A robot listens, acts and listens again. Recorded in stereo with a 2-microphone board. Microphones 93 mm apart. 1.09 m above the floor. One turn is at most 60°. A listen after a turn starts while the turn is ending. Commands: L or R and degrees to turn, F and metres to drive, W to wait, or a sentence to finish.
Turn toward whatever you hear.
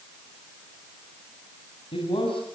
L60
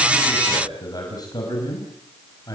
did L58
L40
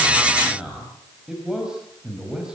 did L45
R10
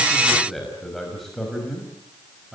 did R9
Facing the man speaking, over 4 m away.